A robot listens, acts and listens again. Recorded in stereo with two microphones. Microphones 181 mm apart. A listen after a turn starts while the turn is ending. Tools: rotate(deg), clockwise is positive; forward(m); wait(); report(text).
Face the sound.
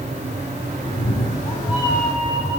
rotate(-20)
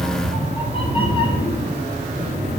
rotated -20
rotate(-20)
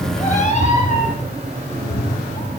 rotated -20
rotate(-35)
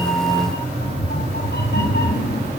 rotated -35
rotate(-110)
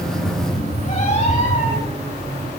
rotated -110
rotate(-40)
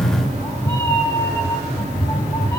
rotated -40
rotate(-15)
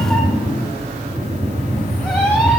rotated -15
report("Found it: a cat meowing, straight ahead, over 4 m away.")